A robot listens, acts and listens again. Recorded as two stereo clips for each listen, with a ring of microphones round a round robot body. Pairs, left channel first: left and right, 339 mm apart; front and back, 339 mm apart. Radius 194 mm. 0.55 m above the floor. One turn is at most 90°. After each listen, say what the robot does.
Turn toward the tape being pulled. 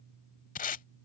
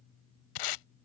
Turn 20° left.
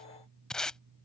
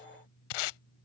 Facing the tape being pulled.